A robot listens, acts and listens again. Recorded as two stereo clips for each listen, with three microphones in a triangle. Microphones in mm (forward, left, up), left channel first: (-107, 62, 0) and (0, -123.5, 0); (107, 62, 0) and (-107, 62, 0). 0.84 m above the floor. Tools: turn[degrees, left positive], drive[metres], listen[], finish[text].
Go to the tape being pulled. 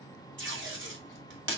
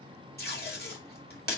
Thought: The tape being pulled: 40° right.
Action: turn[-40]
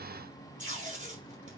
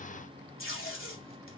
Thought: The tape being pulled is now 10° right.
Action: turn[-10]
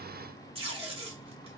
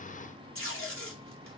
Action: drive[1.0]
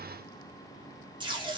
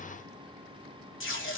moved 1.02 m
Action: drive[1.0]
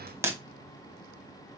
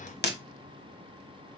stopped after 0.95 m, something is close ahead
Thought: The tape being pulled is now 15° left.
Action: turn[15]
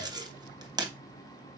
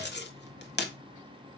Action: finish[Arrived at the tape being pulled, straight ahead.]